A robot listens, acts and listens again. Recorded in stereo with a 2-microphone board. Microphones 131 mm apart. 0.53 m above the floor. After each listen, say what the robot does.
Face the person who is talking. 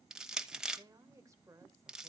Turn 25° right.
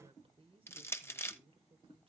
Turn 125° right.
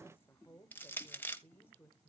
Turn 20° left.
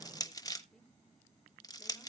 Keep listening.
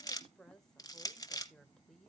Found it: a woman speaking, straight ahead.